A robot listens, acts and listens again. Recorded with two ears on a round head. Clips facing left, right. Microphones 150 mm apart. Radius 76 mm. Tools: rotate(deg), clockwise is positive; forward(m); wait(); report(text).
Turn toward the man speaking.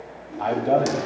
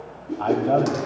rotate(-30)
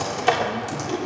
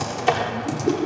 wait()
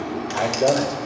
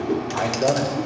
rotate(-20)
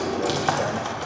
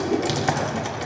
wait()
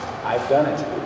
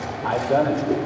rotate(-15)
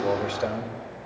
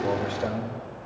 rotate(-20)
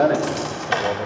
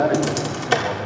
rotate(-150)
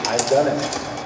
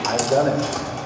rotate(-15)
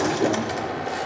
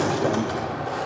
wait()
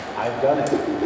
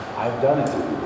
report("Facing the man speaking.")